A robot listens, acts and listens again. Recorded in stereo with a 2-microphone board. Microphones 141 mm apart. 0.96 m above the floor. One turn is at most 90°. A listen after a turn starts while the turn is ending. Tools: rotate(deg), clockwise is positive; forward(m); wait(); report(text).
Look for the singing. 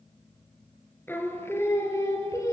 rotate(-20)
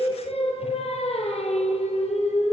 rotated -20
rotate(-90)
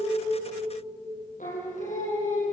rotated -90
rotate(-65)
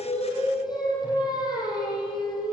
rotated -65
rotate(-30)
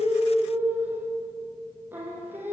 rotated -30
rotate(15)
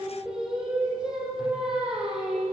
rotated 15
report("Facing the singing.")